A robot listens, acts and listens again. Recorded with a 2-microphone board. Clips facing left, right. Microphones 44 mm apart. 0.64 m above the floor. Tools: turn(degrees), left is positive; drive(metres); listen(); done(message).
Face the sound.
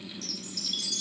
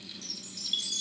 turn(degrees=-35)
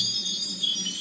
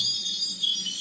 done("Found it: a chime, straight ahead, 2 to 4 m away.")